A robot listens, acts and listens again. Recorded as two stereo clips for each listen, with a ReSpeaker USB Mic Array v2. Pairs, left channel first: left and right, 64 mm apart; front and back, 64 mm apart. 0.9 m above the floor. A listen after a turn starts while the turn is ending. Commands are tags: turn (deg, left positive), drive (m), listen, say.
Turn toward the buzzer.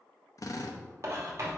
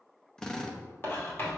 <listen/>
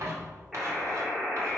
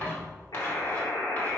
<say>Found it: a buzzer, straight ahead, 2 to 4 m away.</say>